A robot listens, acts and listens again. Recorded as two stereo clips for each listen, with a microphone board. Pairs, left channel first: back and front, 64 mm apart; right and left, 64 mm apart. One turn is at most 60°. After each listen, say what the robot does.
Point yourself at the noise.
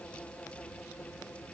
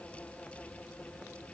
Keep listening.
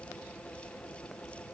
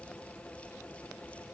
Keep listening.
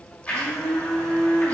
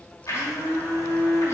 Turn 60° right.
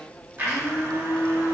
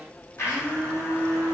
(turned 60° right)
Turn 50° right.
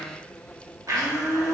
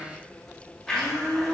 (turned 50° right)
Facing the blender, 1 to 2 m away.